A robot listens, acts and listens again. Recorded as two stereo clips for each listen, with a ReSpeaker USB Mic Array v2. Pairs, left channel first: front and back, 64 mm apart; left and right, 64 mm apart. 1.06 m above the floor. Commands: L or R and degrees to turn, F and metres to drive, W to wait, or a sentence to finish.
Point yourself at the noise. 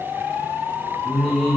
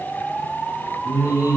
L85
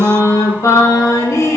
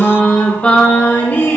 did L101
L40
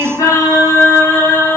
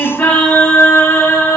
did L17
L50
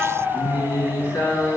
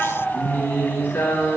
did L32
L30
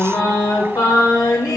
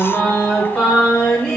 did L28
Found it: singing, straight ahead.